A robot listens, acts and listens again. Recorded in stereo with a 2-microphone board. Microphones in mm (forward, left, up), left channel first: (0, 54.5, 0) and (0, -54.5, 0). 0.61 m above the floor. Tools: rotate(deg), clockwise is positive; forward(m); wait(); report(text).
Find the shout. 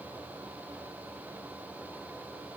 wait()
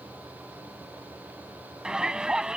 rotate(30)
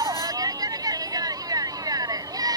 rotate(145)
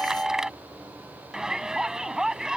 report("Found it: a shout, straight ahead.")